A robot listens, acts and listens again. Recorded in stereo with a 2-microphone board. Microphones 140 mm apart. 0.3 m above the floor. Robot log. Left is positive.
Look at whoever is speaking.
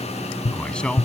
cmd yaw +30
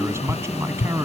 note: So it is at 20° right.
cmd yaw -20
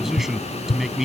end: Found it: a man speaking, straight ahead.